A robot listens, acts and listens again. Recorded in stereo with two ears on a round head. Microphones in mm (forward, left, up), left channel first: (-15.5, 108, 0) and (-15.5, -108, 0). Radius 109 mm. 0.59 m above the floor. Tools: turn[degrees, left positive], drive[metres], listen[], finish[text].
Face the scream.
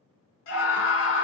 Thought: The scream: about 55° left or 125° left.
Action: turn[55]
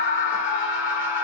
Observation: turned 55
Thought: So it is at 55° left.
Action: turn[55]
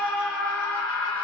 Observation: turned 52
Action: finish[Found it: a scream, straight ahead.]